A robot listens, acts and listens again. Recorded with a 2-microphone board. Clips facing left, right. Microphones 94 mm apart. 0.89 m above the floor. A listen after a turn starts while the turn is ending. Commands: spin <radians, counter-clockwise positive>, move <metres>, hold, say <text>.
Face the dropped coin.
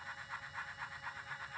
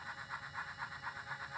hold
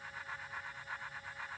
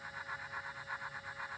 hold
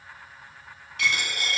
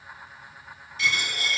spin 1.13
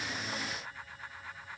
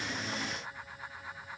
hold
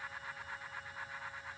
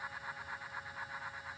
say I heard a dropped coin, but can't make it out now. It was about straight ahead or 50° left.